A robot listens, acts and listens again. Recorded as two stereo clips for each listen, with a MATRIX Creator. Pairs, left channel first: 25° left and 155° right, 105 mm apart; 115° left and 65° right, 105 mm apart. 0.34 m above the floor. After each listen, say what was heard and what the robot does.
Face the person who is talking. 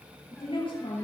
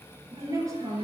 The woman speaking: 10° right. Turn 10° right.
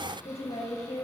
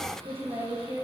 Facing the woman speaking.